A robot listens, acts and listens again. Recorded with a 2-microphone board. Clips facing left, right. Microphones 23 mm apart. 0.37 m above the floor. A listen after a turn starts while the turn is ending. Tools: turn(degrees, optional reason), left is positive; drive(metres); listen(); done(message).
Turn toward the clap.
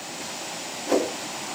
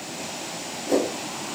listen()
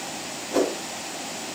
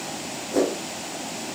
listen()
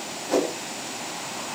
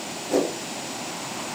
done("I can't make out a clap to turn to.")